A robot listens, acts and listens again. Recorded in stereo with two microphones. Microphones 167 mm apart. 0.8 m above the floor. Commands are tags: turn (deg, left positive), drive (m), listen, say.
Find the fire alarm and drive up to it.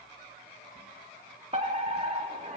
<turn deg="-40"/>
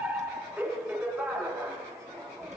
<turn deg="-10"/>
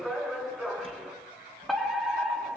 <drive m="1.0"/>
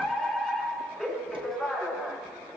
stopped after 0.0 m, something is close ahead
<say>Something is in my way. I am facing the fire alarm but have not reached it.</say>